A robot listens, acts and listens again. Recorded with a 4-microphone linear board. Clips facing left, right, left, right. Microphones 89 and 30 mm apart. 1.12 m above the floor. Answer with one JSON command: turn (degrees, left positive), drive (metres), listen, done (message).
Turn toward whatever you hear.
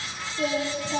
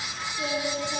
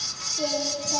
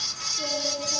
{"turn": 35}
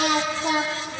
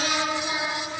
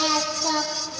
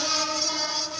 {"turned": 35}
{"turn": 115}
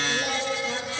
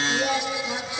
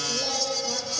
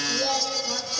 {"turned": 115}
{"done": "Found it: singing, straight ahead, over 4 m away."}